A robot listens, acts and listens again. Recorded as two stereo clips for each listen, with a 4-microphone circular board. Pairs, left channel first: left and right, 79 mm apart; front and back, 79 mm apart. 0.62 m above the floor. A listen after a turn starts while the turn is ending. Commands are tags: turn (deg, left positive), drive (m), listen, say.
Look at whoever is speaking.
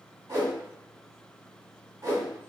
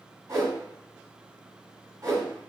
<listen/>
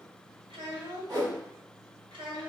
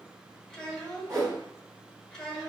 <turn deg="-90"/>
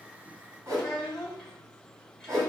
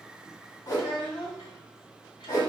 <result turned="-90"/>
<say>Found it: a child speaking, straight ahead.</say>